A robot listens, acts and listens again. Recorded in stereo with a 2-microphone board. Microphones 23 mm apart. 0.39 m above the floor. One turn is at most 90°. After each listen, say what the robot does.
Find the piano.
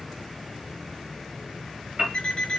Turn 45° right.
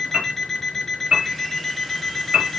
Turn 85° right.
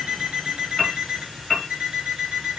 Turn 10° left.
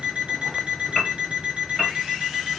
Found it: a piano, straight ahead.